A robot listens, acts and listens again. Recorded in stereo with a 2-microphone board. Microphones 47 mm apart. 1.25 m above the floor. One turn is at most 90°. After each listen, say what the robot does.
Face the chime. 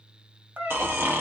Keep listening.
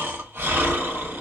Keep listening.
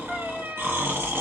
I can't make out a chime to turn to.